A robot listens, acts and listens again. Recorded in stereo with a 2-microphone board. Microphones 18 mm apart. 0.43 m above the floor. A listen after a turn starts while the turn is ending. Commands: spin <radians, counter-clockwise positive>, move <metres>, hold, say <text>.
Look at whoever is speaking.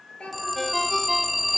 spin 1.57
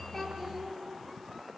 say Found it: a child speaking, straight ahead.